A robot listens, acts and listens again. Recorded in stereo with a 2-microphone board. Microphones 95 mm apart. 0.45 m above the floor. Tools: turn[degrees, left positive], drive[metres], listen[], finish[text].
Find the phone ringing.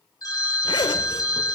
Thought: The phone ringing: about 45° left or 135° left.
Action: turn[45]
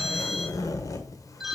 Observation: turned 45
Action: finish[Facing the phone ringing.]